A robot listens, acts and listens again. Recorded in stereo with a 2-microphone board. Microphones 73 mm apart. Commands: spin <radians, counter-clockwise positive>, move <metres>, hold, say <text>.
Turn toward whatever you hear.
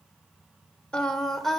spin 0.52
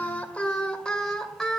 spin 0.52
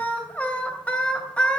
spin 2.88
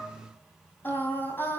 spin 0.52
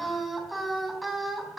say Found it: singing, straight ahead.